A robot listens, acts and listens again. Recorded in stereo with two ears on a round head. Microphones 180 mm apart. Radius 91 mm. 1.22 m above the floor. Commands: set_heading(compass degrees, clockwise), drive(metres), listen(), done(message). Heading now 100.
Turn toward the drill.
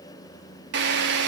set_heading(165)
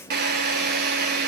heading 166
set_heading(216)
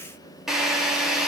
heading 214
done("Facing the drill, 2 to 4 m away.")